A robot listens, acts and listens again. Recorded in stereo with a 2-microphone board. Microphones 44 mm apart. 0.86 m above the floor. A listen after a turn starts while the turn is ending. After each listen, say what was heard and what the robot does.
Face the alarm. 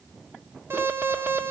The alarm: about 60° right or 120° right. Turn 60° right.
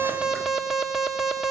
Found it: an alarm, straight ahead.